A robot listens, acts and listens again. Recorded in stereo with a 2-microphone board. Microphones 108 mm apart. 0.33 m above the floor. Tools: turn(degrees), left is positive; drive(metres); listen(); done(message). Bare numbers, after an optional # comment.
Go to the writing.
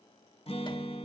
listen()
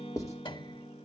# The writing: about 30° left or 150° left.
turn(30)
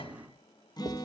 listen()
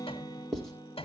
drive(1.0)
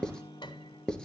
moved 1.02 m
# The writing is now 10° left.
turn(10)
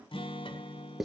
drive(1.0)
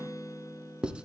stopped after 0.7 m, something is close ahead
# The writing is now 10° right.
turn(-10)
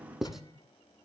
done("I am next to the writing.")